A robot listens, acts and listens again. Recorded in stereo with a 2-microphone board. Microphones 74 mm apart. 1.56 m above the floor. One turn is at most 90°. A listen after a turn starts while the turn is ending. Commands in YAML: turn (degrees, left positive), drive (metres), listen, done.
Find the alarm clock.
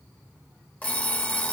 turn: 20
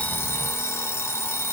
turn: 90
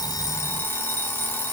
turn: 35
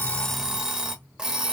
turn: -15
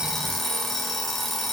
done: "Facing the alarm clock."